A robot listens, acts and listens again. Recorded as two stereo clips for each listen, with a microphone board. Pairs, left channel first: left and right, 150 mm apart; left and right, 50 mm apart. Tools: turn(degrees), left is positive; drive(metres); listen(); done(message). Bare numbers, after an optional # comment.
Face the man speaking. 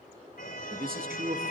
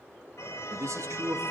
turn(-90)
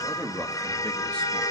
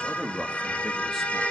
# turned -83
done("Found it: a man speaking, straight ahead, 2 to 4 m away.")